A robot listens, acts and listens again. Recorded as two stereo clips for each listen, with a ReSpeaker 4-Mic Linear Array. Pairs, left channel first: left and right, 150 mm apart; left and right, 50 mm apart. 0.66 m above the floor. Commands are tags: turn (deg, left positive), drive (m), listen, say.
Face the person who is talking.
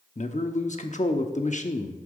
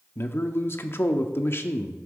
<turn deg="55"/>
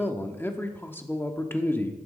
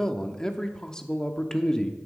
<turn deg="15"/>
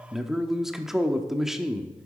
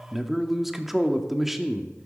<say>Found it: a man speaking, straight ahead, under 1 m away.</say>